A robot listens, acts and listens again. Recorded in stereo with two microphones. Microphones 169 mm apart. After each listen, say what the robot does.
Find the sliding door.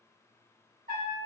Keep listening.
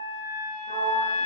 Turn 60° right.
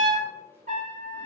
Keep listening.
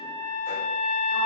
Keep listening.
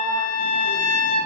Turn 15° right.
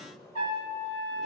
Keep listening.
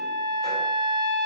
Keep listening.
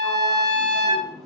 Facing where the sliding door came from. I can't hear it now.